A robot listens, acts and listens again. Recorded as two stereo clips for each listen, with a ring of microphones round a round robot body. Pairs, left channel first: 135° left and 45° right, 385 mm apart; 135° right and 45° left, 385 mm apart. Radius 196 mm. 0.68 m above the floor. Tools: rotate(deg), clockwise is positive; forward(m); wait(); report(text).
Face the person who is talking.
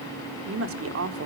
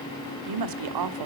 rotate(-10)
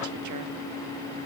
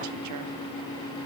wait()
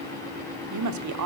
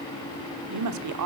report("Found it: a woman speaking, straight ahead, 1 to 2 m away.")